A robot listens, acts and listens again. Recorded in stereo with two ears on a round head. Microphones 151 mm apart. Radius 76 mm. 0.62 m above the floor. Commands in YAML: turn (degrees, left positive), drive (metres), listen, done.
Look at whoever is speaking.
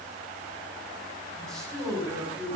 turn: 30
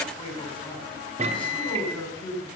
turn: 150
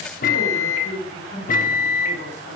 turn: 50
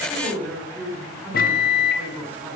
turn: -10
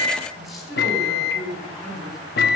done: "Found it: a man speaking, straight ahead, over 4 m away."